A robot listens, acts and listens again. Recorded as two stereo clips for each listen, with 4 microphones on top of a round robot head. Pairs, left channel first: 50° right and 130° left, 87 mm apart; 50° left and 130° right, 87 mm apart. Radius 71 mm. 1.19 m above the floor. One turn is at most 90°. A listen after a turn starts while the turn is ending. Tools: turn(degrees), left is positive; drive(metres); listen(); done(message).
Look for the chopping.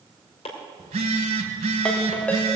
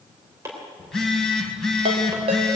turn(degrees=-70)
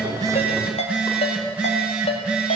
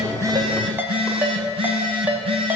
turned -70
listen()
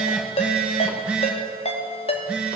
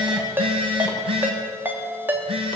listen()
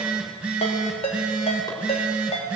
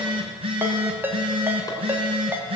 done("Facing where the chopping came from. I can't hear it now.")